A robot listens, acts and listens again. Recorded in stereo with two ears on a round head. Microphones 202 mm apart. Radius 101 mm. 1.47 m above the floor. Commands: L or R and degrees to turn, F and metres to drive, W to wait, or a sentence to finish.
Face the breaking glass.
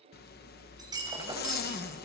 R15
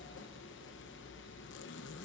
W
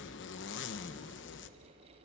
I heard breaking glass, but can't make it out now. It was about straight ahead or 150° right.